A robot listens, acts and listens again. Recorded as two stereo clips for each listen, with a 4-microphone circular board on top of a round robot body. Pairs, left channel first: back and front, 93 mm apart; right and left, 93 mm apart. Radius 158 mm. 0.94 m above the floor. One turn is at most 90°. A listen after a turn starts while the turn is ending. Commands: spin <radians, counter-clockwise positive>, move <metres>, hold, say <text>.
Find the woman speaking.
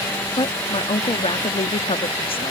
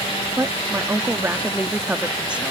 spin 1.57
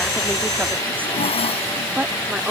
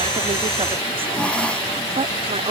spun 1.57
spin 1.40
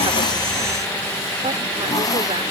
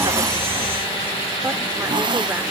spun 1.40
hold
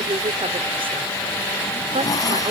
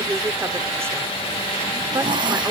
spin 0.44
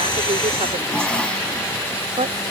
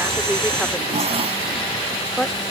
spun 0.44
say Found it: a woman speaking, straight ahead.